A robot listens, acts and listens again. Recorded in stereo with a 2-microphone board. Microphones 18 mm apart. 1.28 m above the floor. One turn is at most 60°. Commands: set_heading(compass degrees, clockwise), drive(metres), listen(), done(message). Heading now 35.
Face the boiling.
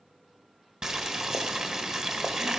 set_heading(80)
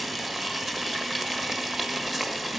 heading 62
set_heading(82)
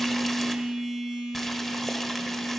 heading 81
listen()
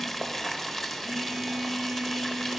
done("Found it: boiling, straight ahead.")